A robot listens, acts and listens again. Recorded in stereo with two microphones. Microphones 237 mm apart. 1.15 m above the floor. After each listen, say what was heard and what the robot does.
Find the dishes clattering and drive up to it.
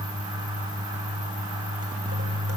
Keep listening.
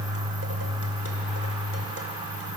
Keep listening.
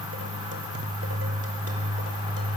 I can't make out dishes clattering to turn to.